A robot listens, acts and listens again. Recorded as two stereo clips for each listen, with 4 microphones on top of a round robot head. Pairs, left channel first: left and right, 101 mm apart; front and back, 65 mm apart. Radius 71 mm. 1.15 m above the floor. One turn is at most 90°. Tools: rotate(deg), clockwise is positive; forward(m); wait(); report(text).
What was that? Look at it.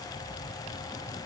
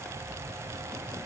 wait()
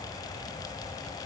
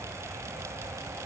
wait()
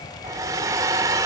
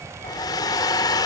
rotate(30)
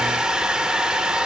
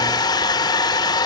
report("Facing the hair dryer, under 1 m away.")